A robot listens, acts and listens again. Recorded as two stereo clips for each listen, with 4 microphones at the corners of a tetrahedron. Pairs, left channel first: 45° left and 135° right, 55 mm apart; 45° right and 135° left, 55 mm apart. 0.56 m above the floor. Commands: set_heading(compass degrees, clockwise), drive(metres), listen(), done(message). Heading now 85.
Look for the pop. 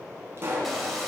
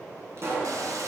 set_heading(270)
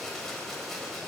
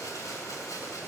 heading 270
done("I heard a pop from this way, but can't make it out now.")